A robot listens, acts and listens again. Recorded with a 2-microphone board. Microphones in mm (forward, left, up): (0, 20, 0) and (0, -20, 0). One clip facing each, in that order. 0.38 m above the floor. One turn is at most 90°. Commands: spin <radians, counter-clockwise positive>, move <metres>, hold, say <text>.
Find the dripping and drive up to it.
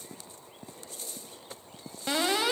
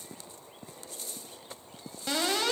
hold
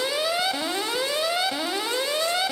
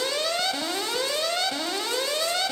hold
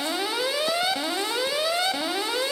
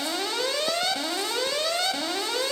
say I can't make out dripping to turn to.